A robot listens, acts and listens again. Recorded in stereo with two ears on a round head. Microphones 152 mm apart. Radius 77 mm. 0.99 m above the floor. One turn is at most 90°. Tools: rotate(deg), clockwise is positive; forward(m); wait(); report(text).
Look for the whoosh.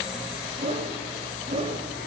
rotate(35)
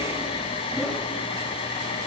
wait()
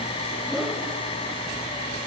report("Facing the whoosh.")